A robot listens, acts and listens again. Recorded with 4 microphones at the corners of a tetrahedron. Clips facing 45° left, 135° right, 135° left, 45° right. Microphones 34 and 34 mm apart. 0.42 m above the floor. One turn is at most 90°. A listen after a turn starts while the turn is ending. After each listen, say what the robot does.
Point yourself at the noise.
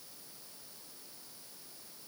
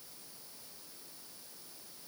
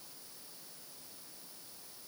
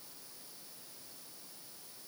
Keep listening.
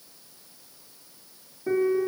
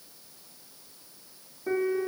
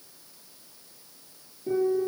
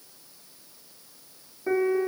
Turn 50° right.
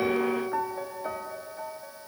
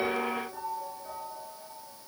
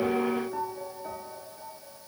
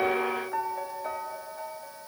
Turn 10° left.
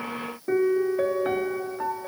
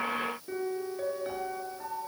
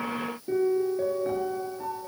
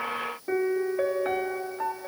Found it: a piano, straight ahead, 1 to 2 m away.